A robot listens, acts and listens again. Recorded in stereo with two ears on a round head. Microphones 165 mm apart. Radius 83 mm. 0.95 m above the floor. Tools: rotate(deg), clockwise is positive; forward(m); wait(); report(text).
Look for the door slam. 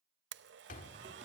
rotate(-50)
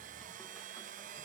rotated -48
wait()
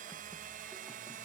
report("I heard a door slam, but can't make it out now. It was about straight ahead or 85° left.")